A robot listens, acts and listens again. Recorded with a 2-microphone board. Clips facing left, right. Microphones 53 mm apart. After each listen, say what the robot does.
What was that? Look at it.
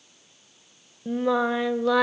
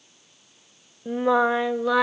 Turn 30° right.
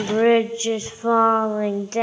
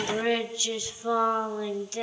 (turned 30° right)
Turn 55° left.
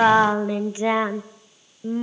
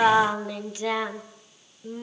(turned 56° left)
Turn 35° left.
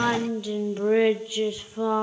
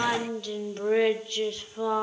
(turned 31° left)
Turn 10° left.
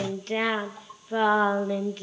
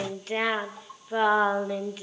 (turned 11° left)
Found it: singing, straight ahead.